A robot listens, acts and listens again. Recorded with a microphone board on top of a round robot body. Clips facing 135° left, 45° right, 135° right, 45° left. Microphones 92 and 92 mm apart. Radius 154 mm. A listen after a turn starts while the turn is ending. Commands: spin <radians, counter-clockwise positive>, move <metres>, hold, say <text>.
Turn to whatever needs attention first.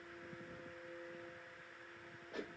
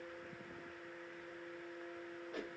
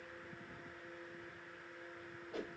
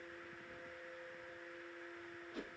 hold
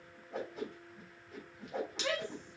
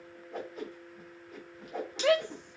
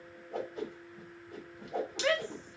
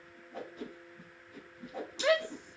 spin -0.52
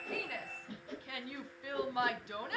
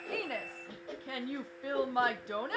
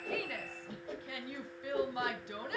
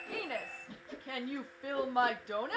say Found it: a shout, straight ahead, 1 to 2 m away.